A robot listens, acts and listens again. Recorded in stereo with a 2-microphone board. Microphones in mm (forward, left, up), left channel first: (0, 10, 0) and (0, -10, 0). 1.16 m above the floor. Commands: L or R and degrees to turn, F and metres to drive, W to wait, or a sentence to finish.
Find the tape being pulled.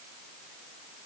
W
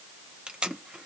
R55
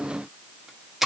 R20
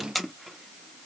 Facing the tape being pulled.